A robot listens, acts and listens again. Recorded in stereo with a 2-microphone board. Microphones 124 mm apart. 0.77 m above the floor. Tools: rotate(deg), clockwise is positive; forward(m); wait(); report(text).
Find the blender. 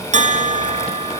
wait()
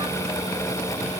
wait()
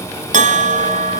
report("I can't make out a blender, only a bell.")